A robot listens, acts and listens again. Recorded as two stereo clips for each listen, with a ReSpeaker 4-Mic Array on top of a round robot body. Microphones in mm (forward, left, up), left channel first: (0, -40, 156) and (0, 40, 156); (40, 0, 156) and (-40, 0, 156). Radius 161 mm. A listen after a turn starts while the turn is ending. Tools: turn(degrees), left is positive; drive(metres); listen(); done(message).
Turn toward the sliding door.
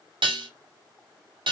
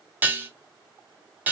listen()
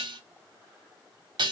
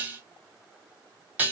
listen()
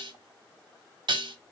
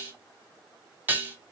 done("I can't make out a sliding door, only dishes clattering.")